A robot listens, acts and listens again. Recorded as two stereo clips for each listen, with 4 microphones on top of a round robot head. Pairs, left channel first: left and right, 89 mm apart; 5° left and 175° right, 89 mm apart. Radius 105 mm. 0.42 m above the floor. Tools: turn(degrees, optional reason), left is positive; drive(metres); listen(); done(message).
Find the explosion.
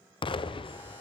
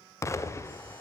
turn(degrees=65, reason="The explosion: 65° left.")
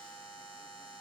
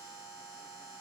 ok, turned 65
done("I heard an explosion from this way, but can't make it out now.")